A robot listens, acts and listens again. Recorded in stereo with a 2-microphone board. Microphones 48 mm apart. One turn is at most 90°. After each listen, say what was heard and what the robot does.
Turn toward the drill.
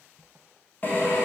The drill: about 35° left or 145° left. Turn 35° left.
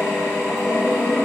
So it is at 105° left. Turn 90° left.
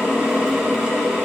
The drill is now 20° right. Turn 20° right.
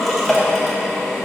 Facing the drill, 1 to 2 m away.